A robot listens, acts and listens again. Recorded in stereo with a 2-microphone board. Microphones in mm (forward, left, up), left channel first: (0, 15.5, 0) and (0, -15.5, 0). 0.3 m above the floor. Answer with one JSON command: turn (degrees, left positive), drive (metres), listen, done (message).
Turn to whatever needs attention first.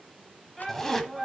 {"turn": 30}
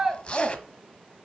{"turn": -20}
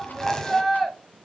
{"done": "Found it: a shout, straight ahead, 1 to 2 m away."}